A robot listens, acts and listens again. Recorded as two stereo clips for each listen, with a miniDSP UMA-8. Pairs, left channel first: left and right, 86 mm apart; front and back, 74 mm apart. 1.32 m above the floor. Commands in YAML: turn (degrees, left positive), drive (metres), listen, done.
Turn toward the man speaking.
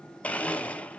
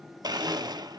listen: true
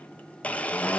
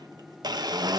listen: true
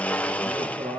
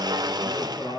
turn: -80
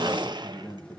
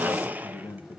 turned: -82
turn: 20
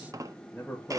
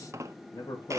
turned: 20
done: "Found it: a man speaking, straight ahead."